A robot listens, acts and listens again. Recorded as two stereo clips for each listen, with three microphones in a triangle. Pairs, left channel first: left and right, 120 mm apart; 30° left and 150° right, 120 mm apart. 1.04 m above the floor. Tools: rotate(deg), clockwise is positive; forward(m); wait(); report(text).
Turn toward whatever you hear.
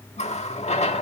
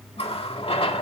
rotate(-65)
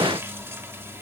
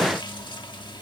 wait()
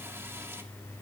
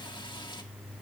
wait()
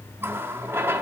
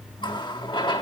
rotate(20)
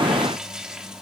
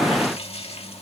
report("Facing the running tap.")